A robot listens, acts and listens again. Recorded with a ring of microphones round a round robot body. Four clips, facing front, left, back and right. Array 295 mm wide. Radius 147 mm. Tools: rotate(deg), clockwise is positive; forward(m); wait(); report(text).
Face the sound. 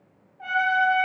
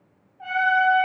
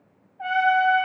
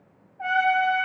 rotate(120)
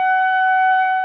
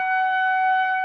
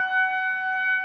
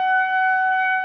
rotate(-15)
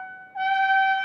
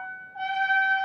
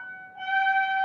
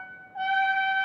report("Facing the trumpet, 2 to 4 m away.")